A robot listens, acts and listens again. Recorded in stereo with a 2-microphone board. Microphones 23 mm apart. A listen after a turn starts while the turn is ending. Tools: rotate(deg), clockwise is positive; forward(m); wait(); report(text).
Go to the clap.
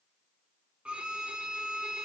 wait()
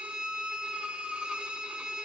wait()
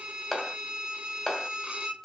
rotate(-30)
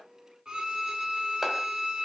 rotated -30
wait()
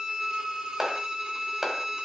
rotate(20)
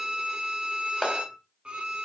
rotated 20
forward(1.0)
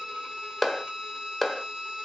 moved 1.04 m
forward(1.0)
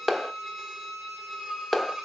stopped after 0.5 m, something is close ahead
report("I am next to the clap.")